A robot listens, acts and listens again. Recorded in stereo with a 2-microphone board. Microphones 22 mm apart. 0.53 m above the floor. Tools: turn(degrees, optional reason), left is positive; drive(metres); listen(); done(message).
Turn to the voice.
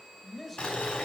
turn(degrees=30)
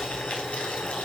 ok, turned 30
listen()
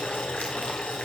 listen()
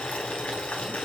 done("I heard a man speaking, but can't make it out now. It was about 25° right or 145° left.")